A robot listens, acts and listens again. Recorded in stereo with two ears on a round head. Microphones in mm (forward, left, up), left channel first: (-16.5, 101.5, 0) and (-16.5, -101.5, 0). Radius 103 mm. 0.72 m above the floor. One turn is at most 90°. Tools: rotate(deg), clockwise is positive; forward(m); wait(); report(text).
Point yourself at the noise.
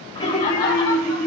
rotate(-20)
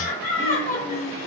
rotate(-90)
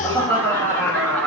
rotate(-10)
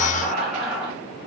report("Facing the laughter, 1 to 2 m away.")